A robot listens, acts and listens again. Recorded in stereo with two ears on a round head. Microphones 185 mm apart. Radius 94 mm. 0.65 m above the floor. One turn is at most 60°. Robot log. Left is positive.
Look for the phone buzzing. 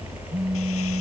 cmd yaw -30
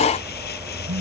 note: So it is at 150° right.
cmd yaw -60
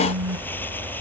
note: The phone buzzing is now 105° right.
cmd yaw -60
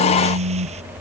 note: The phone buzzing is now 60° right.
cmd yaw -60
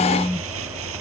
note: The phone buzzing is now 15° left.
cmd yaw +15
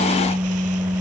end: Facing the phone buzzing.